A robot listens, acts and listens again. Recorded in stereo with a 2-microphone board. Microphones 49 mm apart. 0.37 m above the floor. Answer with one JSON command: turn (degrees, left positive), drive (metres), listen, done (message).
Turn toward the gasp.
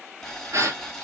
{"turn": -90}
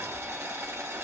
{"done": "Facing where the gasp came from. I can't hear it now."}